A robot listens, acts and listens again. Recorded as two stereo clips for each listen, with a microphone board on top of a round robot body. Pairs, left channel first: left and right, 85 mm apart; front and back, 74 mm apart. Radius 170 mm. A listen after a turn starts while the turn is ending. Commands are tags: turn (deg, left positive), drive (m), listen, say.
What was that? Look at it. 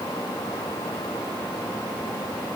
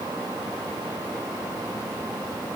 <listen/>
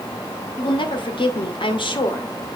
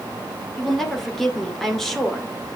<turn deg="85"/>
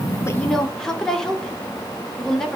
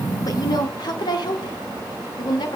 <say>Found it: a woman speaking, straight ahead.</say>